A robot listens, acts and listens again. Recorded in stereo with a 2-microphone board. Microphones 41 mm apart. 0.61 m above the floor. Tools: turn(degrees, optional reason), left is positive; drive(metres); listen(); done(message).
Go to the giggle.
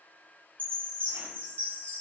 listen()
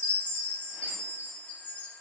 listen()
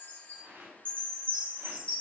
done("I can't make out a giggle to turn to.")